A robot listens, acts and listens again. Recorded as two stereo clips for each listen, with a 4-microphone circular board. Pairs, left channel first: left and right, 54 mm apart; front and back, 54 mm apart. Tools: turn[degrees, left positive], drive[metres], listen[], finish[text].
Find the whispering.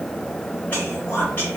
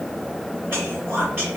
Thought: The whispering: 140° left.
Action: turn[140]
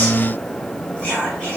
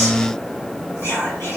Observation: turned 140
Thought: The whispering is now 25° left.
Action: turn[25]
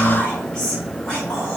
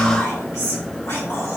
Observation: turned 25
Thought: The whispering is now 15° left.
Action: turn[15]
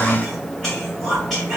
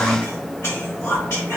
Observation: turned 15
Action: finish[Facing the whispering, 1 to 2 m away.]